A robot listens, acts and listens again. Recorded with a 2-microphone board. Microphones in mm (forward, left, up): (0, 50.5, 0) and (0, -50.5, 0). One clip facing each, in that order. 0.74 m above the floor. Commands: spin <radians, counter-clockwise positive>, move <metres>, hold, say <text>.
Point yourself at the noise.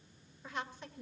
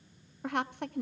spin -1.13
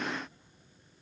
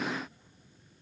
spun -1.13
hold
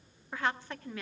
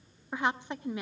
spin -0.35
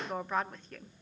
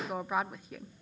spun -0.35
spin -0.17
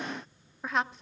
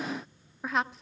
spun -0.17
say Facing the woman speaking, under 1 m away.